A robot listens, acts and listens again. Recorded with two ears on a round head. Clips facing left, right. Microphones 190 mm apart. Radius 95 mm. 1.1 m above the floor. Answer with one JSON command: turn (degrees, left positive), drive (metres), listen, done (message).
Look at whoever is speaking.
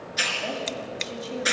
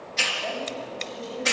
{"turn": 90}
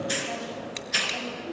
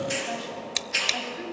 {"listen": true}
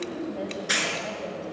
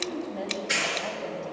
{"done": "Facing the woman speaking, over 4 m away."}